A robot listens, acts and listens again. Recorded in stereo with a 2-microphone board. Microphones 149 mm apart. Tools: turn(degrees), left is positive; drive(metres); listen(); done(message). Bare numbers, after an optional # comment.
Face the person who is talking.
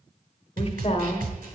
# The woman speaking: about 40° left or 140° left.
turn(40)
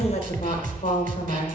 # So it is at 90° left.
turn(90)
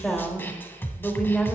done("Found it: a woman speaking, straight ahead, 1 to 2 m away.")